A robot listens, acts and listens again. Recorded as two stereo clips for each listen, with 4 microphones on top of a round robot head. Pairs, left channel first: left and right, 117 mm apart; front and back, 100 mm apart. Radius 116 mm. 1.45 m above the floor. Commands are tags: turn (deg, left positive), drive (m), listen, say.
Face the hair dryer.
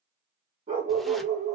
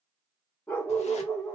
<listen/>
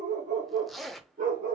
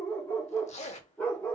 <listen/>
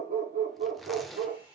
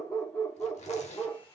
<turn deg="-45"/>
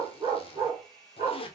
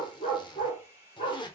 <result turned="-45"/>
<say>Found it: a hair dryer, straight ahead.</say>